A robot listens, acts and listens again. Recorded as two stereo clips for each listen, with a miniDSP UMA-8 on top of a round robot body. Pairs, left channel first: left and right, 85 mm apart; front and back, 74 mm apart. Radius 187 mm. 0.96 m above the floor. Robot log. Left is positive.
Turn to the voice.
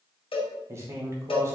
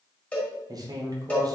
note: The man speaking: 150° right.
cmd yaw -150
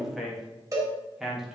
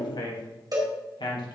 end: Facing the man speaking, 2 to 4 m away.